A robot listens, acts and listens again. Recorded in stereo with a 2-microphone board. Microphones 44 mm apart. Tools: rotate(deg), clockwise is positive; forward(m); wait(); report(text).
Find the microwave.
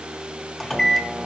rotate(-30)
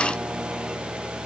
wait()
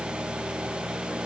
wait()
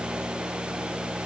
report("I heard a microwave, but can't make it out now. It was about 20° right or 140° left.")